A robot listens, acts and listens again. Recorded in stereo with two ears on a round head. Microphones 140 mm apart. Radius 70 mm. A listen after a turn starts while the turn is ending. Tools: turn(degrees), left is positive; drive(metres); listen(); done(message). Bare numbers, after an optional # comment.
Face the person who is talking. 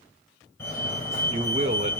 # The man speaking: about 45° right or 135° right.
turn(-45)
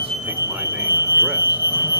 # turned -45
listen()
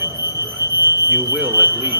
listen()
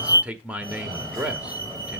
# So it is at 10° right.
turn(-10)
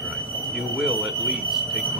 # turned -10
done("Facing the man speaking.")